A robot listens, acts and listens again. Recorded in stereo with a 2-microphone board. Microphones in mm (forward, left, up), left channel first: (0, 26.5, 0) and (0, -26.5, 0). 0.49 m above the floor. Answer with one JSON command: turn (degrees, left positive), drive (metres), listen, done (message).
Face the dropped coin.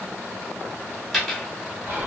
{"turn": 30}
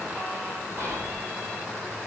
{"listen": true}
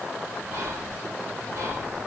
{"done": "I heard a dropped coin, but can't make it out now. It was about 30° right or 150° left."}